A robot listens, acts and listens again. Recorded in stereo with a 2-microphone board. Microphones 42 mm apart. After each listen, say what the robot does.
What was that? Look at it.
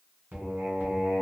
Turn 50° right.
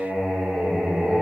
Turn 20° right.
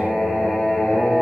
Found it: singing, straight ahead.